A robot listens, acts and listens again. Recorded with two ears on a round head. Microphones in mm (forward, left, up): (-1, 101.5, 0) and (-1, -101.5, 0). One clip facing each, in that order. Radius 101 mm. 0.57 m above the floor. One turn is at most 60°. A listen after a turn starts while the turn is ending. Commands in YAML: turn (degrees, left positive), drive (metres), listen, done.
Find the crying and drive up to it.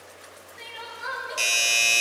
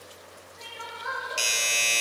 turn: 40
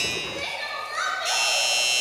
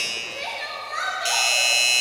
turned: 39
drive: 1.0
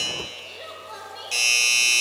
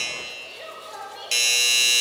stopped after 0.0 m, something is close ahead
done: "Something is in my way. I am facing the crying but have not reached it."